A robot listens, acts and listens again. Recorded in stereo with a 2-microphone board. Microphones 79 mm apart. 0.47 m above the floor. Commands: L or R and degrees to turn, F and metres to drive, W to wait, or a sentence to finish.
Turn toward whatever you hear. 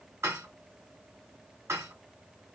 R35
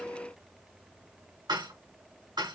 R110
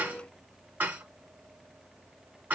R25
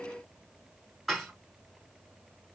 Found it: dishes clattering, straight ahead.